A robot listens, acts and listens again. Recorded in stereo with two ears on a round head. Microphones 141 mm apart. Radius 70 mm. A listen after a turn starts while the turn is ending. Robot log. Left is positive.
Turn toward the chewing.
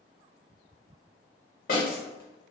cmd idle
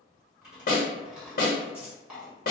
cmd yaw -30
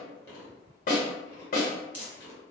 note: So it is at 25° left.
cmd yaw +25
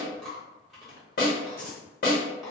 end: Found it: chewing, straight ahead, 1 to 2 m away.